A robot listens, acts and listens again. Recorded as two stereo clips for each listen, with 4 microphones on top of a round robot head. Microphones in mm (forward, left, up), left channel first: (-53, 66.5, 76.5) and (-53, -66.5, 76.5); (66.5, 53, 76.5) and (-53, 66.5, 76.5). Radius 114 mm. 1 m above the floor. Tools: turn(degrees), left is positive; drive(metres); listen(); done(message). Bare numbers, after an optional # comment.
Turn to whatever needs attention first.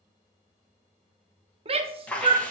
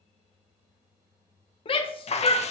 # The shout: 45° right.
turn(-45)
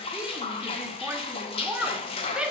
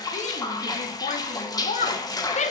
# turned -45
# The shout is now 10° right.
turn(-10)
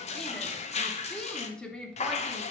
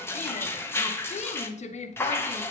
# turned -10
done("Found it: a shout, straight ahead.")